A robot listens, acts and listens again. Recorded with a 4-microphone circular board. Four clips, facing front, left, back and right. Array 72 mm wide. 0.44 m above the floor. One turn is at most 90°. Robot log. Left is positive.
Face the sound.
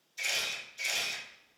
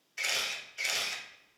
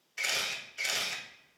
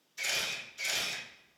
note: The camera shutter: 140° left.
cmd yaw +90
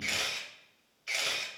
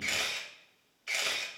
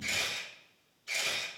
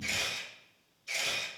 note: The camera shutter is now 60° left.
cmd yaw +60
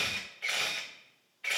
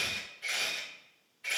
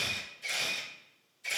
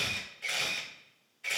note: The camera shutter is now 10° right.
cmd yaw -10
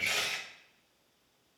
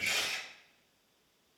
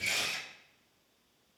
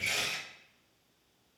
end: Found it: a camera shutter, straight ahead.